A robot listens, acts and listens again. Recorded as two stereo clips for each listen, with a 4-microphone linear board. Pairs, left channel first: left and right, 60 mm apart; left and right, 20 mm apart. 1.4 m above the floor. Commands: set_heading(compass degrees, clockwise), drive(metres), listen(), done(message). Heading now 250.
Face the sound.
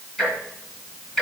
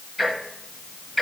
set_heading(220)
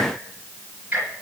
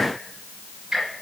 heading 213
set_heading(243)
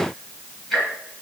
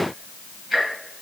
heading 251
set_heading(241)
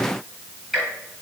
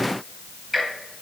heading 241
done("Found it: ticking, straight ahead.")